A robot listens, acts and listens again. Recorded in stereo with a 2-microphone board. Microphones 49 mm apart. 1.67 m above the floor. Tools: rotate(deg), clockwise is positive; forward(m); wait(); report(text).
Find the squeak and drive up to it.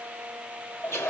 wait()
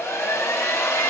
wait()
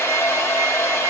report("I can't make out a squeak to turn to.")